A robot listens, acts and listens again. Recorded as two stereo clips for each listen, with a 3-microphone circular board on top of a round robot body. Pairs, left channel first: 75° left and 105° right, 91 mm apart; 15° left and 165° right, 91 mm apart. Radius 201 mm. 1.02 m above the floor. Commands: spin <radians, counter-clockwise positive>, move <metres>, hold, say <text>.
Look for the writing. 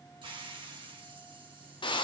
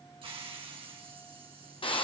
hold
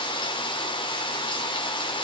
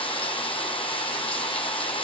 hold
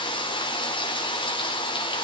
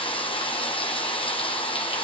say I can't make out writing to turn to.